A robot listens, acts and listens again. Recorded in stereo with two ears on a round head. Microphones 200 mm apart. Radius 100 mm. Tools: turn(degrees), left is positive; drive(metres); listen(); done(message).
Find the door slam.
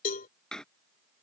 turn(degrees=30)
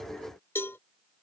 listen()
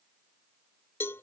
done("I heard a door slam, but can't make it out now. It was about 25° right or 145° left.")